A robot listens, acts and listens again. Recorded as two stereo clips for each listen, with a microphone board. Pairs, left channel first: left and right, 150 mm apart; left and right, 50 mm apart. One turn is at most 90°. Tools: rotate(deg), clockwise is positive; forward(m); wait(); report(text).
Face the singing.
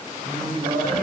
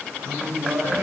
rotate(90)
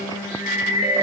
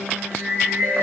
rotate(20)
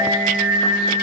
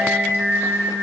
rotate(25)
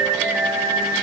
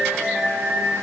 rotate(30)
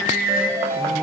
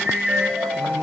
rotate(15)
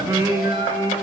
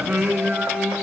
rotate(25)
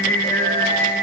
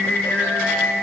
rotate(-20)
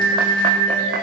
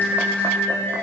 report("Facing the singing.")